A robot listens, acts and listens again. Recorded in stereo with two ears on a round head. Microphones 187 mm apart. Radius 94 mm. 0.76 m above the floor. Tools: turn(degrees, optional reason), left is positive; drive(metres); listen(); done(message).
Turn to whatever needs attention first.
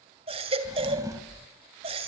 turn(degrees=-30, reason="The baby crying: about 30° right or 150° right.")
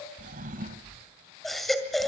done("Found it: a baby crying, straight ahead, 2 to 4 m away.")